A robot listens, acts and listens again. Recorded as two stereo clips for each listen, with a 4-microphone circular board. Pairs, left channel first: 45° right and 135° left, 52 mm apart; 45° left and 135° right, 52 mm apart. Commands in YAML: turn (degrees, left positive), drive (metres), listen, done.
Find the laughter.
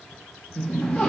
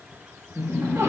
turn: -120
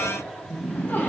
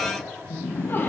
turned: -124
done: "Facing the laughter."